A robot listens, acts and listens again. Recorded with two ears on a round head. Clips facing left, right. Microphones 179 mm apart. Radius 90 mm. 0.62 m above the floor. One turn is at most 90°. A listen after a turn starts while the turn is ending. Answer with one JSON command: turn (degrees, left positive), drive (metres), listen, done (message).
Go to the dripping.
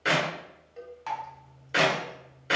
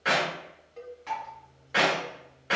{"turn": 90}
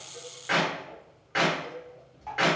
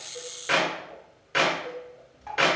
{"turn": -10}
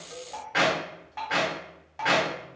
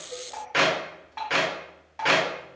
{"drive": 1.0}
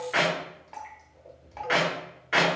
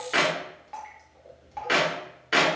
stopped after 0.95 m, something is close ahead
{"done": "I am next to the dripping."}